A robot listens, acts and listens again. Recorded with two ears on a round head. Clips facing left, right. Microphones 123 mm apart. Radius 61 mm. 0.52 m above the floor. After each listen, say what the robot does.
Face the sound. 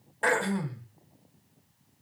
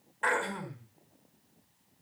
Turn 45° left.
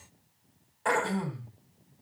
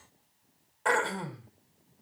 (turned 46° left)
Facing the throat clearing.